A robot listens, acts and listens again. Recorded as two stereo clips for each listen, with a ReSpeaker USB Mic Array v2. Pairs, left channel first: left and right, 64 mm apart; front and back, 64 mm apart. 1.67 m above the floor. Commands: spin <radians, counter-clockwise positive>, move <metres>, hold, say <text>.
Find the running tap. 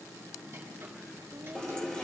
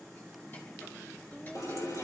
spin 0.35
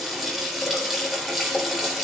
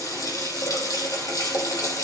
say Found it: a running tap, straight ahead.